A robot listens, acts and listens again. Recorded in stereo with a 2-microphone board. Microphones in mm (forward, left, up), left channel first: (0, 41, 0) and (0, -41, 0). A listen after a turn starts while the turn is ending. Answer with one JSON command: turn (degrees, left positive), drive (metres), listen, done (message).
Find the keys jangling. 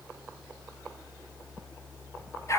{"listen": true}
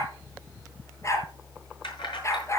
{"turn": 90}
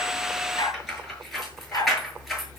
{"done": "Found it: keys jangling, straight ahead."}